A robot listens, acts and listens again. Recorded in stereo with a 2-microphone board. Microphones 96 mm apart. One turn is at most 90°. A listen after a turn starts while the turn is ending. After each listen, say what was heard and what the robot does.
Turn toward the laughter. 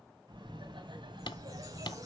The laughter: about 55° right or 125° right. Turn 55° right.
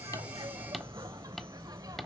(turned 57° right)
So it is at 40° right. Turn 40° right.
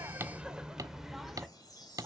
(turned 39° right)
Facing the laughter.